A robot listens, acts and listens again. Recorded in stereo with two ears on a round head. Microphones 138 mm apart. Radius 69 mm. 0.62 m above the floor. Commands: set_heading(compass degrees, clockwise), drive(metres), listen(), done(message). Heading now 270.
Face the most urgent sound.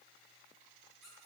listen()
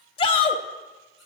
set_heading(240)
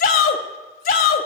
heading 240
set_heading(130)
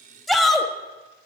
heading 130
done("Found it: a shout, straight ahead, 1 to 2 m away.")